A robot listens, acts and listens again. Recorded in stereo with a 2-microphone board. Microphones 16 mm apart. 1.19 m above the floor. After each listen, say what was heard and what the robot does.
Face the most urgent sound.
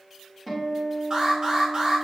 The alarm: about 40° right or 140° right. Turn 40° right.
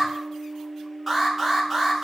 Found it: an alarm, straight ahead, 2 to 4 m away.